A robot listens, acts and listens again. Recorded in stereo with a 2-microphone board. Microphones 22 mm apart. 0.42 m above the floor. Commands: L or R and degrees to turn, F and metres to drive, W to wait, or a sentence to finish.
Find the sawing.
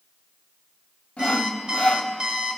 L75
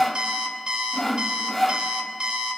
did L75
Facing the sawing, under 1 m away.